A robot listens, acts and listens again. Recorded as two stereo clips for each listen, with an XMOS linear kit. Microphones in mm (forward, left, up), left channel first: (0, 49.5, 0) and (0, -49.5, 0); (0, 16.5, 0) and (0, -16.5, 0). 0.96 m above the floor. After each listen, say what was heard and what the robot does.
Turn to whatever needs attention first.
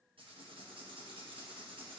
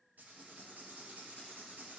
Keep listening.
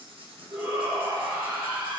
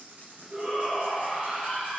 The shout: about 30° right or 150° right. Turn 30° right.
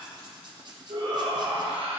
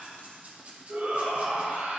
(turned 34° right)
So it is at 115° right. Turn 115° right.
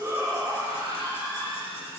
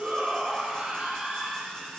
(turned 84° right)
The shout is now 30° right. Turn 30° right.
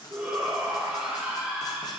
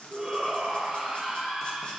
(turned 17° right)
The shout is now 10° right. Turn 10° right.
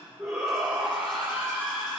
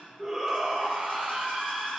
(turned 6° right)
Facing the shout.